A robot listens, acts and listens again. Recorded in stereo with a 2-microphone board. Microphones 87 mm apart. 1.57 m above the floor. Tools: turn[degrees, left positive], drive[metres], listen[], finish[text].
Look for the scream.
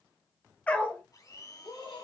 Action: turn[90]
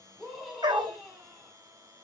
Action: finish[Facing the scream.]